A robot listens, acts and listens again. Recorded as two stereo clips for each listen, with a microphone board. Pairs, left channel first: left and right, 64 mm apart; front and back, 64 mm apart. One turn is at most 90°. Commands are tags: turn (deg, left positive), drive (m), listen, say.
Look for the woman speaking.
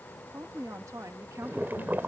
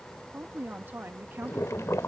<turn deg="-90"/>
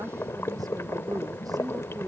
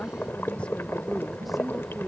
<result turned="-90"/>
<turn deg="-90"/>
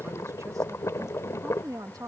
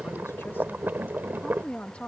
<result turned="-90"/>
<turn deg="-70"/>
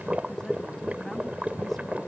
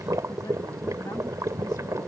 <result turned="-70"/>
<listen/>
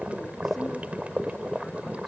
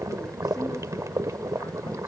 <listen/>
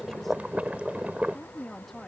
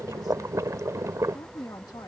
<say>Found it: a woman speaking, straight ahead.</say>